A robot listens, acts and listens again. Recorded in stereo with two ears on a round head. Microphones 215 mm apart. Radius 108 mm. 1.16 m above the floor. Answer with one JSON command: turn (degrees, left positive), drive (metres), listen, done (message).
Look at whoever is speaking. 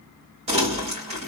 {"listen": true}
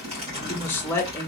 {"turn": 30}
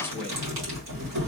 {"listen": true}
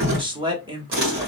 {"turn": -20}
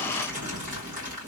{"listen": true}
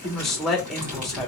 {"done": "Found it: a man speaking, straight ahead."}